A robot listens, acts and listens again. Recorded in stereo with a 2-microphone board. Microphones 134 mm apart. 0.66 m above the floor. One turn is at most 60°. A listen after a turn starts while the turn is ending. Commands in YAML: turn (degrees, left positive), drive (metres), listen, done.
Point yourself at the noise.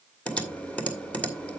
turn: 30
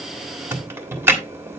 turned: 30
turn: -20
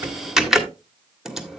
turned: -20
done: "Found it: typing on a keyboard, straight ahead, 1 to 2 m away."